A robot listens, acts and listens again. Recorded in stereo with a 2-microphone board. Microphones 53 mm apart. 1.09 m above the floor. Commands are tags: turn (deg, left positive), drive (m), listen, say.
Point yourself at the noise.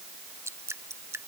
<turn deg="-60"/>
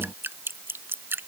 <turn deg="-50"/>
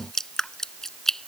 <turn deg="10"/>
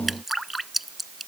<say>Facing the dripping.</say>